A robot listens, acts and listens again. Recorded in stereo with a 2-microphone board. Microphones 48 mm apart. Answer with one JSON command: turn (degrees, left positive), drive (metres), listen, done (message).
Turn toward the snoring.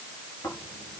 {"turn": 90}
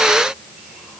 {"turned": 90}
{"listen": true}
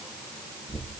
{"turn": 10}
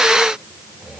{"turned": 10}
{"done": "Found it: snoring, straight ahead."}